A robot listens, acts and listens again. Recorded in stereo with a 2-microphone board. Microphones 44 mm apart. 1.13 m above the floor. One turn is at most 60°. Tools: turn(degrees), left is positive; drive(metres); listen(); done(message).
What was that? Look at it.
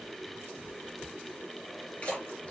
turn(degrees=25)
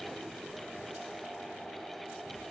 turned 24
listen()
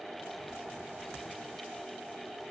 done("I heard a splash, but can't make it out now. It was about straight ahead or 130° left.")